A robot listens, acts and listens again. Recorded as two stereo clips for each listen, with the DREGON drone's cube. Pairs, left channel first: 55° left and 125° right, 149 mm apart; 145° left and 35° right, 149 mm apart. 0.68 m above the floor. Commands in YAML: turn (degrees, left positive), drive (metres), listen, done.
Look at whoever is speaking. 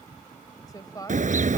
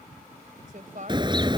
turn: -10
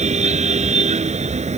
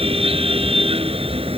listen: true
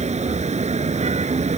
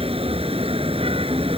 listen: true
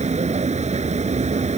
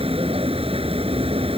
done: "I heard a woman speaking from this way, but can't make it out now."